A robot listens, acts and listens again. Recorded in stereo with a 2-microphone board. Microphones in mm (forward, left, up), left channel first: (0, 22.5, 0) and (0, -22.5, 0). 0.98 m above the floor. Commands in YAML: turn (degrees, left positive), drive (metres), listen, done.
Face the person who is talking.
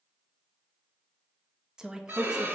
turn: -15
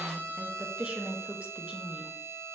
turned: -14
turn: -150
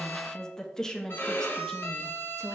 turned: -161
turn: 15
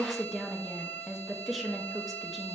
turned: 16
done: "Found it: a woman speaking, straight ahead, 1 to 2 m away."